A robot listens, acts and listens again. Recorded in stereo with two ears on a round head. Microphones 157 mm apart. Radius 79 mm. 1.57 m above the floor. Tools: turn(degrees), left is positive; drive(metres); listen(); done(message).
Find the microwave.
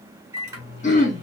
turn(degrees=-15)
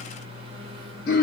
turn(degrees=-150)
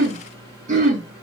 turn(degrees=20)
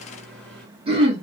done("Facing the microwave, 1 to 2 m away.")